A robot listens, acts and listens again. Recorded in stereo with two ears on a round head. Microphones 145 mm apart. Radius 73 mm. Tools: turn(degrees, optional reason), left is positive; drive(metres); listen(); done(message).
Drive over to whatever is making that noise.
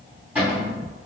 turn(degrees=-30)
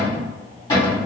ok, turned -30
turn(degrees=20, reason="So it is at 20° left.")
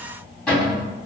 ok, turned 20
drive(metres=1.0)
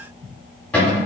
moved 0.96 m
turn(degrees=10, reason="The cupboard door is now 10° left.")
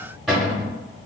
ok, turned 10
drive(metres=1.0)
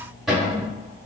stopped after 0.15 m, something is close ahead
done("Arrived at the cupboard door, straight ahead.")